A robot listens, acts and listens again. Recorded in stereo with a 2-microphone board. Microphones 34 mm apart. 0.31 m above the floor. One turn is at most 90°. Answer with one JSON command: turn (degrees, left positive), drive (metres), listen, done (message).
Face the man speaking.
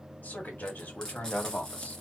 {"turn": 45}
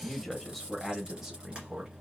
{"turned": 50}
{"turn": -20}
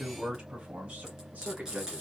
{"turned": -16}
{"turn": -35}
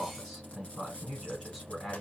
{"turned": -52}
{"done": "Facing the man speaking, 2 to 4 m away."}